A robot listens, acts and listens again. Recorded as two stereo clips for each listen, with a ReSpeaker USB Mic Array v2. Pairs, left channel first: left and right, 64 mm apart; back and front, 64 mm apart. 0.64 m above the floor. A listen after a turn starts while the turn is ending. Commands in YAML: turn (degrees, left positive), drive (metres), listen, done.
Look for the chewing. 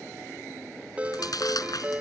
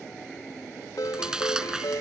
turn: 80
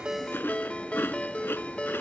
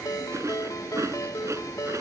turn: 35
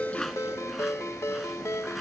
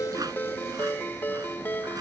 listen: true
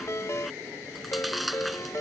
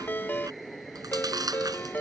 done: "Found it: chewing, straight ahead."